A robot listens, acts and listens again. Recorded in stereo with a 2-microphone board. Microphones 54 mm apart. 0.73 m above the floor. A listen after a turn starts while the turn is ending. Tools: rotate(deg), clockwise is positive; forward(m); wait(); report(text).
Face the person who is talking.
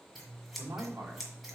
rotate(50)
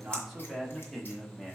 rotate(-10)
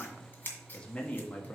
rotate(-35)
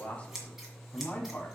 rotate(-40)
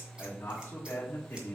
rotate(-45)
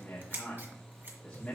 rotate(-25)
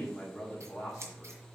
report("Facing the man speaking, 1 to 2 m away.")